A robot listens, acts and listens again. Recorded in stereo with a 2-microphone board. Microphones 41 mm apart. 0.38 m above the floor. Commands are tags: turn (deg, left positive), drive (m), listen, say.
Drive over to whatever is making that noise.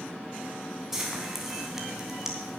<turn deg="-30"/>
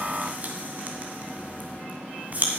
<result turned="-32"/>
<turn deg="-140"/>
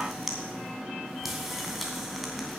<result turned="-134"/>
<drive m="1.0"/>
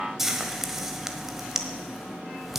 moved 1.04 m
<turn deg="-10"/>
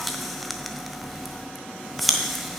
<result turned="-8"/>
<drive m="1.0"/>
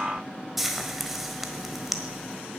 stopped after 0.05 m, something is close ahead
<say>I am next to the frying.</say>